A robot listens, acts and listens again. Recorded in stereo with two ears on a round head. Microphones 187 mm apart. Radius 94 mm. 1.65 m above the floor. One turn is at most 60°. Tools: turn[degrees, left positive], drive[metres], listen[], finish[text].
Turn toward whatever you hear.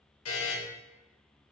Thought: The buzzer: about 75° left or 105° left.
Action: turn[60]
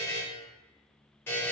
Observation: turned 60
Thought: So it is at 10° left.
Action: turn[10]
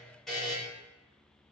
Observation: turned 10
Action: finish[Found it: a buzzer, straight ahead.]